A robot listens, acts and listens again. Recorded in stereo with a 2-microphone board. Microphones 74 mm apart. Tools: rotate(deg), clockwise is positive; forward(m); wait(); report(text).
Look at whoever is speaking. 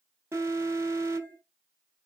wait()
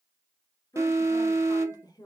rotate(-60)
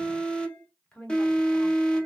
rotate(-15)
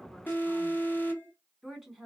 report("Found it: a woman speaking, straight ahead.")